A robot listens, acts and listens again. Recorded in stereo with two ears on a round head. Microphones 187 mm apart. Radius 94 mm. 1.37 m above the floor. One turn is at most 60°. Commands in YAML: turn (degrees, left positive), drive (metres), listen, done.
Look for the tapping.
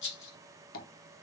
turn: 45
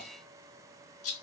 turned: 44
listen: true
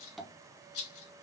done: "Facing the tapping."